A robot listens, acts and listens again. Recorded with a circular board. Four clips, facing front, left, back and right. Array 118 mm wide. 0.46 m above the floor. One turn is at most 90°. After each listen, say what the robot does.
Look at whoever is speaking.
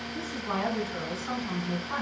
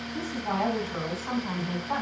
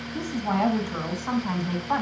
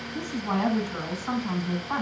Turn 90° left.
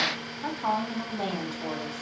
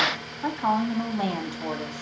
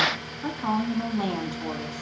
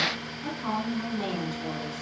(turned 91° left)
Turn 80° left.
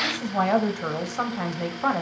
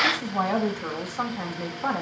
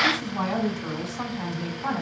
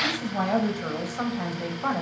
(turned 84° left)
Facing the woman speaking, 2 to 4 m away.